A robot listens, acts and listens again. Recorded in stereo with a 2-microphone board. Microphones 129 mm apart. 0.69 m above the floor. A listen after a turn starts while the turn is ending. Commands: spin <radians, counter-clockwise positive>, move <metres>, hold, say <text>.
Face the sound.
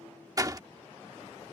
spin -0.52
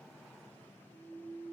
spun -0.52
hold
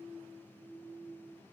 say I heard a door slam, but can't make it out now. It was about straight ahead or 120° right.